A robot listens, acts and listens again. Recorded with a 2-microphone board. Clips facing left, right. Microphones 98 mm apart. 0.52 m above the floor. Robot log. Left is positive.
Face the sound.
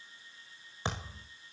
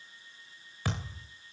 note: The thud: about 25° left or 155° left.
cmd yaw +25
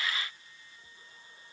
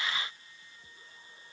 cmd idle
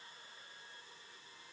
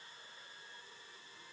end: I heard a thud, but can't make it out now. It was about straight ahead or 130° left.